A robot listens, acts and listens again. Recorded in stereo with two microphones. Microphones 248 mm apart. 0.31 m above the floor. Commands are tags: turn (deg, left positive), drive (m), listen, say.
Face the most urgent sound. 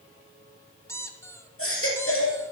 <turn deg="60"/>
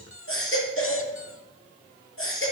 <turn deg="60"/>
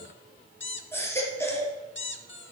<turn deg="10"/>
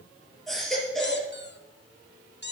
<say>Found it: a baby crying, straight ahead, 2 to 4 m away.</say>